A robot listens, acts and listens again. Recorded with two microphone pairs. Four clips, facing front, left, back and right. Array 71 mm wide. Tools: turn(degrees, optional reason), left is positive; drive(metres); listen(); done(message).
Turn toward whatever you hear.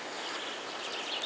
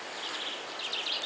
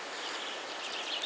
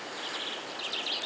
listen()
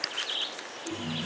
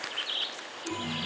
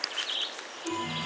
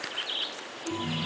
turn(degrees=170, reason="The chime: 170° left.")
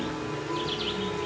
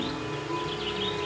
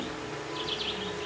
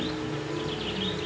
turn(degrees=40, reason="The chime is now 40° left.")
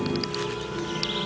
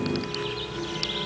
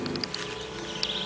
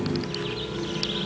turn(degrees=10, reason="The chime is now 10° left.")
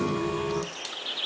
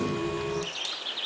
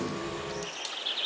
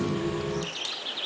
done("Facing the chime.")